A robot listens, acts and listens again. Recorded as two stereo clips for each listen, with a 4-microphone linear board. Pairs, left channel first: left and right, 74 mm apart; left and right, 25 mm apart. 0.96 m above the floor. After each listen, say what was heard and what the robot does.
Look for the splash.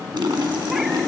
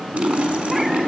Turn 90° right.
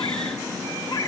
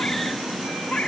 I heard a splash from this way, but can't make it out now.